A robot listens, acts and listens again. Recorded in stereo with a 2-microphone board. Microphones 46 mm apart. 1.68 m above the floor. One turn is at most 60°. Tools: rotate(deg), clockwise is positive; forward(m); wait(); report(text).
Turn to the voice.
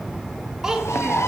rotate(30)
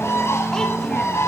wait()
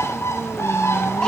wait()
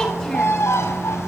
report("I heard a child speaking, but can't make it out now. It was about 15° left or 135° right.")